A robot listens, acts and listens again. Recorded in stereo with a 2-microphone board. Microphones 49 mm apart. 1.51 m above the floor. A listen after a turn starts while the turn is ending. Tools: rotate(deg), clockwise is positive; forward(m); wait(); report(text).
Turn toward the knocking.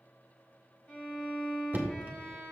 rotate(35)
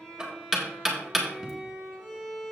report("Found it: knocking, straight ahead, 1 to 2 m away.")